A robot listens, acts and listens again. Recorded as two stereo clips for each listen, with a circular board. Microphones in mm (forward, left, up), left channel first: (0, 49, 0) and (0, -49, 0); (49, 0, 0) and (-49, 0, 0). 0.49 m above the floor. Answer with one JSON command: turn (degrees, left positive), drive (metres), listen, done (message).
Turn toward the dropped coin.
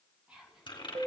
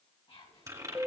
{"turn": 125}
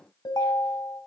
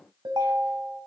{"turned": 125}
{"done": "Facing where the dropped coin came from. I can't hear it now."}